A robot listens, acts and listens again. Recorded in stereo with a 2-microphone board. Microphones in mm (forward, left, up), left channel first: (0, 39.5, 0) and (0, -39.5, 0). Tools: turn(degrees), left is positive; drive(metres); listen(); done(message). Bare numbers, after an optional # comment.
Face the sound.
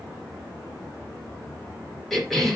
turn(30)
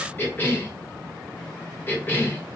# So it is at 150° left.
turn(150)
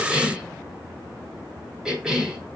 # The cough is now 15° right.
turn(-15)
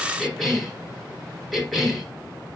done("Facing the cough.")